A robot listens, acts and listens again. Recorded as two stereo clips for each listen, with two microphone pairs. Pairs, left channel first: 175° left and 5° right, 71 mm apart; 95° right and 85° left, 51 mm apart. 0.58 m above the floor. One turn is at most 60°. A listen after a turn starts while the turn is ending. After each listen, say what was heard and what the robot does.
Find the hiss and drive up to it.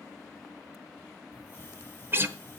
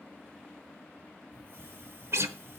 The hiss: 115° left. Turn 60° left.
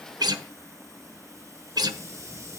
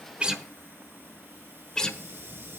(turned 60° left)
The hiss is now 40° left. Turn 40° left.
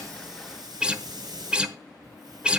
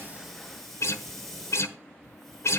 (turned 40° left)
The hiss is now 15° right. Turn 15° right.
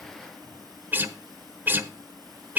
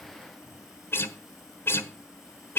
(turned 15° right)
Keep listening.
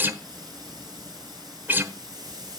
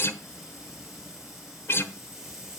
Drive 1.0 m forward.
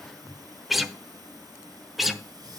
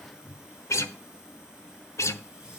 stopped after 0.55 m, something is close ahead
Blocked. The hiss is further on, straight ahead.